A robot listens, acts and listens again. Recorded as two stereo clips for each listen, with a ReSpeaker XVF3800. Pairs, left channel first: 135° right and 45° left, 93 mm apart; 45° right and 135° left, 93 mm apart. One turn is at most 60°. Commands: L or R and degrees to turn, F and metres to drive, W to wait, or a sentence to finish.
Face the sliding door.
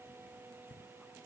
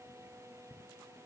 W
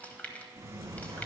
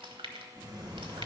L60
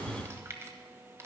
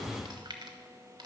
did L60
L50
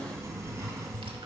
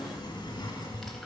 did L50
R10
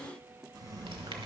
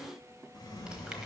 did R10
Found it: a sliding door, straight ahead.